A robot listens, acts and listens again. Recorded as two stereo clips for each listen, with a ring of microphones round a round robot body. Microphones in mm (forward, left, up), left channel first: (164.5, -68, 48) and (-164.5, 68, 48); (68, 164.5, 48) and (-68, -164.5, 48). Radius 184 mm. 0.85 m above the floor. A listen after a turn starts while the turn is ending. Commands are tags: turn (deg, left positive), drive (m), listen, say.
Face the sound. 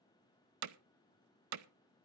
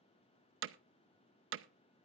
<turn deg="-165"/>
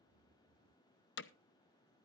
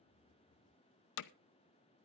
<turn deg="35"/>
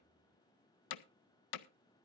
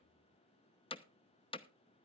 <say>Found it: hammering, straight ahead.</say>